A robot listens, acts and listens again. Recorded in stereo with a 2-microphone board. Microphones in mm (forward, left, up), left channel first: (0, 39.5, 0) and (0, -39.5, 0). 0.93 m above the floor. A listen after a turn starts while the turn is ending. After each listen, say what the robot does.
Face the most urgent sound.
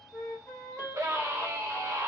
Turn 40° right.
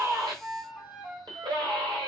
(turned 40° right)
Turn 100° right.
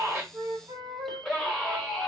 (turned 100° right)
Found it: a scream, straight ahead.